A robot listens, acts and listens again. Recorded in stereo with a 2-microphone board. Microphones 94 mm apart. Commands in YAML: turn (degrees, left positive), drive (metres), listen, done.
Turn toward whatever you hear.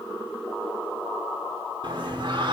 turn: -60
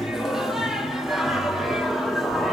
done: "Found it: singing, straight ahead."